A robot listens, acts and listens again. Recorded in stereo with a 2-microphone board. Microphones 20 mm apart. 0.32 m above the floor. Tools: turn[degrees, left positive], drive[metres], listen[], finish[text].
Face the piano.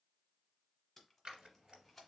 Action: listen[]
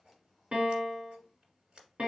Thought: The piano: about 55° right or 125° right.
Action: turn[-55]
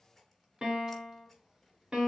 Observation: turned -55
Thought: So it is at 65° right.
Action: turn[-65]
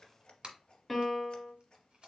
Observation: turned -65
Action: finish[Facing the piano.]